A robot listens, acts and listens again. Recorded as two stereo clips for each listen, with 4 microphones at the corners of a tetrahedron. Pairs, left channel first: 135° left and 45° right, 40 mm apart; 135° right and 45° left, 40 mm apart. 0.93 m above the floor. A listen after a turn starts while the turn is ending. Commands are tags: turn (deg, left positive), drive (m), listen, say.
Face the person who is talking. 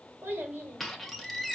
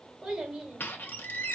<turn deg="-30"/>
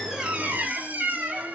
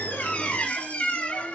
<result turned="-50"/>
<turn deg="20"/>
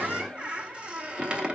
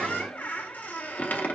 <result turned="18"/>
<listen/>
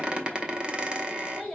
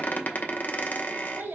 <turn deg="35"/>
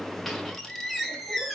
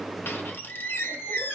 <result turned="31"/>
<listen/>
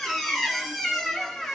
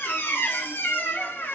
<listen/>
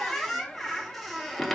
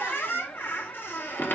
<say>Facing where the child speaking came from. I can't hear it now.</say>